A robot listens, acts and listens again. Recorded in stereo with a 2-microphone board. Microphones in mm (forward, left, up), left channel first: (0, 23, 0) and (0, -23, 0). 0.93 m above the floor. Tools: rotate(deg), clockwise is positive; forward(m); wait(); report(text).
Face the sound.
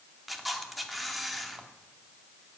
rotate(30)
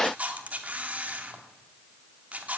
rotate(145)
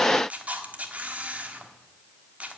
rotate(30)
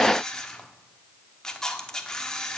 rotate(-15)
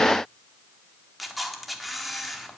report("Found it: a camera shutter, straight ahead.")